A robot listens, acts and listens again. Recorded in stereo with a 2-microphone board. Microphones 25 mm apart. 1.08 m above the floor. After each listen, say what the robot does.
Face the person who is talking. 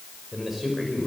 Turn 30° right.
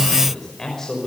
Turn 15° left.
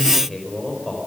Found it: a man speaking, straight ahead.